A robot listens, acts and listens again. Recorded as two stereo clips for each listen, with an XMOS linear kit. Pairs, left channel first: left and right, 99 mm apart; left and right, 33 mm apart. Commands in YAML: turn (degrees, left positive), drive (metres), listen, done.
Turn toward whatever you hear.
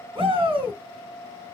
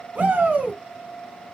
turn: -60
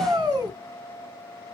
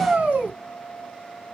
turn: -50
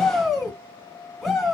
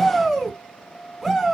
done: "Facing the shout, 2 to 4 m away."